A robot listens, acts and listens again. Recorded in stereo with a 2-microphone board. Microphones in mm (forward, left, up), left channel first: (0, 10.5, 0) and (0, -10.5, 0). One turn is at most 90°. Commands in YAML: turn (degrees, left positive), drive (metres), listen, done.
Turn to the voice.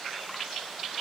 listen: true
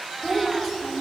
turn: 30
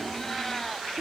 listen: true
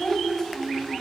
turn: 90
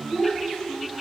turn: 60
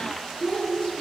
turn: 35
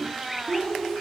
turn: -20
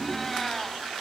listen: true
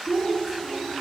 done: "Facing the child speaking, over 4 m away."